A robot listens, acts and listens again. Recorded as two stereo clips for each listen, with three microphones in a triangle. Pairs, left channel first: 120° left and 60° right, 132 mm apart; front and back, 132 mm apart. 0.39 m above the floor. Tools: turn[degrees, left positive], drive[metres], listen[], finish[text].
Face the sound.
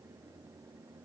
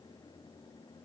Action: listen[]
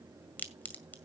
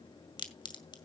Thought: The crack: 45° left.
Action: turn[45]
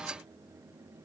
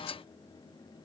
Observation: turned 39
Action: finish[I heard a crack from this way, but can't make it out now.]